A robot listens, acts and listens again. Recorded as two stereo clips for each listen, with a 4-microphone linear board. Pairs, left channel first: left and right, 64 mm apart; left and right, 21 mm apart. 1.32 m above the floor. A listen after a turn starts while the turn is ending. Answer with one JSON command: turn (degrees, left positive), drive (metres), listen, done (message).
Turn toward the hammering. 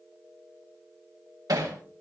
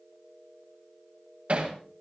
{"turn": -75}
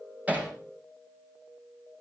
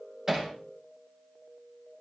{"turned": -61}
{"listen": true}
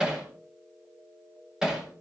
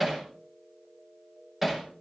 {"turn": -10}
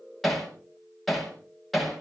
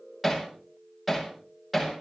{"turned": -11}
{"done": "Facing the hammering, over 4 m away."}